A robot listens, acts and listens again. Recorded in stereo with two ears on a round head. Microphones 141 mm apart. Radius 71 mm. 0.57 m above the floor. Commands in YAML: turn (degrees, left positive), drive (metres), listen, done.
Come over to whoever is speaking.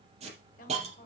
turn: 60
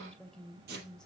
drive: 1.0
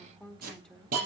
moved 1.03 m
drive: 1.0
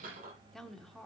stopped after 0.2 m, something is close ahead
done: "Arrived at the woman speaking, straight ahead."